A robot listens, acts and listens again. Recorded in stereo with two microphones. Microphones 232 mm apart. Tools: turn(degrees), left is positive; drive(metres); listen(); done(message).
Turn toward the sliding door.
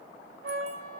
listen()
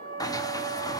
turn(degrees=15)
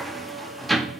done("Facing the sliding door.")